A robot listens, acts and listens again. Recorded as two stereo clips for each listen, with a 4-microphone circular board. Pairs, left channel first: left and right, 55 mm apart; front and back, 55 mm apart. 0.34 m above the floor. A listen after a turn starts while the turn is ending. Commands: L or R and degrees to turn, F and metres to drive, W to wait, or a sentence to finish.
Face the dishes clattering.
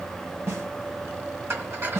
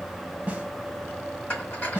R55
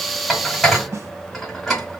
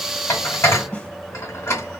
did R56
Facing the dishes clattering.